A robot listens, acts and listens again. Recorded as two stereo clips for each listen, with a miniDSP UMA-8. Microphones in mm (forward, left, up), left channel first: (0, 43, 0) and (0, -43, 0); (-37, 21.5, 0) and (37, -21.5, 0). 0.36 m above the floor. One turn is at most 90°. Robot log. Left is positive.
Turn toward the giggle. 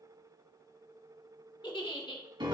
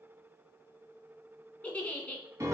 note: The giggle: 75° left.
cmd yaw +75
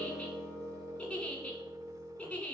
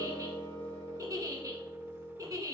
note: The giggle is now 15° left.
cmd yaw +15
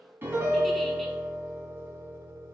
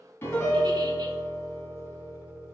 cmd idle
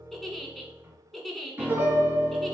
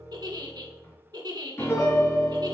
end: Facing the giggle.